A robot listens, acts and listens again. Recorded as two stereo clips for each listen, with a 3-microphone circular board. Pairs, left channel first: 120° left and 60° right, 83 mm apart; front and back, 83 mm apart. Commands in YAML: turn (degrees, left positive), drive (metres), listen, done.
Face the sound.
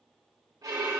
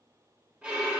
turn: -100
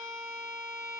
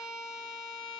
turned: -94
turn: -10
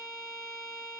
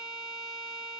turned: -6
done: "Facing the violin."